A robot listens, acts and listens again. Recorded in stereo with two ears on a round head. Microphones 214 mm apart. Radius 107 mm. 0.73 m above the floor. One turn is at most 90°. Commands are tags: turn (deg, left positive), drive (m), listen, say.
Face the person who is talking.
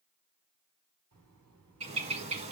<turn deg="-90"/>
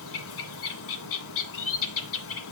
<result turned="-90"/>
<listen/>
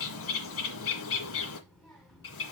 <say>Found it: a child speaking, straight ahead, over 4 m away.</say>